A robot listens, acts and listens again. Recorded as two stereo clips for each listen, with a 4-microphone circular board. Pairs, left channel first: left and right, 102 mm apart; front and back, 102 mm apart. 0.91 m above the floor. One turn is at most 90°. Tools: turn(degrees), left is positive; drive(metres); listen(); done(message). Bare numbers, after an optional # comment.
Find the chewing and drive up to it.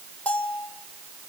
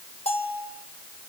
listen()
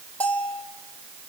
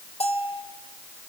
listen()
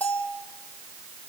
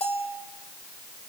done("I can't make out chewing to turn to.")